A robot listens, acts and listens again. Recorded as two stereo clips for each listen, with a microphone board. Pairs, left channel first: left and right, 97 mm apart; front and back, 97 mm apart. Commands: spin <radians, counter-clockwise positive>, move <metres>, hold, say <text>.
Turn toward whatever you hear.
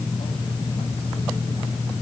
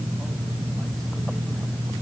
hold
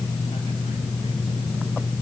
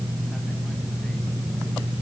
hold
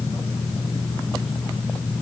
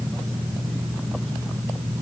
say I can't make out anything to turn to.